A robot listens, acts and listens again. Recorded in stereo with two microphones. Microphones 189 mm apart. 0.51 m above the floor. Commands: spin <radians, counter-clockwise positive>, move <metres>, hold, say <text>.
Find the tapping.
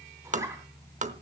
spin -0.70
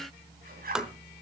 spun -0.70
say Facing the tapping, under 1 m away.